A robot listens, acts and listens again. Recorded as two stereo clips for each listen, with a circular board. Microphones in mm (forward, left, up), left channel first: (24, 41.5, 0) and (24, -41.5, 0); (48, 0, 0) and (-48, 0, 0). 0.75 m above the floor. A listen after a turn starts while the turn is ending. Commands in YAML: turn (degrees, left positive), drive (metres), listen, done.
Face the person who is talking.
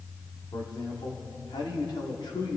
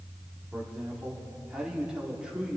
turn: 100
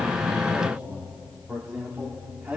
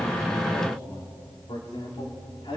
turn: -20
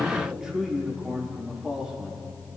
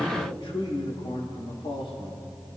done: "Found it: a man speaking, straight ahead, 2 to 4 m away."